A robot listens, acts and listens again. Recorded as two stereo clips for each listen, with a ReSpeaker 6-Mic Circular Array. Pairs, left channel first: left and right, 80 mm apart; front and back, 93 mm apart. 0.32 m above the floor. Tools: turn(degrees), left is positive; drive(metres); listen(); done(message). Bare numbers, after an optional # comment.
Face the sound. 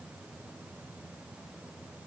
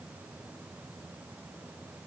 listen()
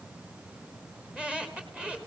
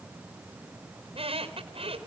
# The squeak: 170° right.
turn(-170)
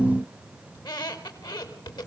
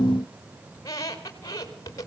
# The squeak is now 55° left.
turn(55)
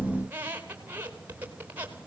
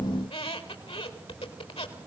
# The squeak is now 20° right.
turn(-20)
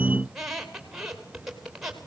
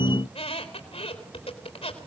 done("Found it: a squeak, straight ahead.")